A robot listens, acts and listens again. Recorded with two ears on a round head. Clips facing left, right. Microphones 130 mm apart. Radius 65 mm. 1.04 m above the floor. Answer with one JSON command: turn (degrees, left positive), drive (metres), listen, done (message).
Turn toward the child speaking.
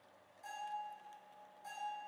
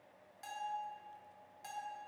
{"listen": true}
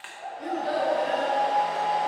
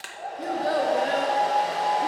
{"turn": -90}
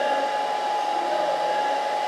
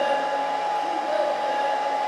{"turn": -30}
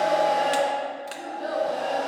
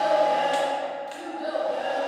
{"turn": -10}
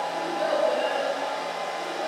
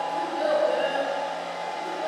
{"done": "Facing the child speaking, 2 to 4 m away."}